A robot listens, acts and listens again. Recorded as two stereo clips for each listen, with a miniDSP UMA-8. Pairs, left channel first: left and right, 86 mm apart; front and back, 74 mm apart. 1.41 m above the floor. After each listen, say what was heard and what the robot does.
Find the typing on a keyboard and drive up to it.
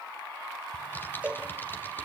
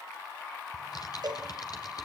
The typing on a keyboard: 25° left. Turn 25° left.
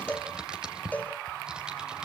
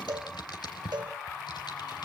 The typing on a keyboard is now 10° right. Turn 10° right.
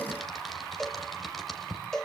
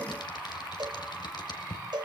Drive 1.0 m forward.
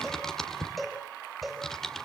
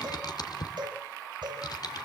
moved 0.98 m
Drive 1.0 m forward.
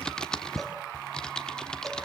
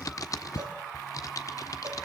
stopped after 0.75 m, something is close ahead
The typing on a keyboard is now 10° left. Turn 10° left.
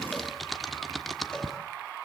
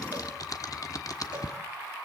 I am next to the typing on a keyboard.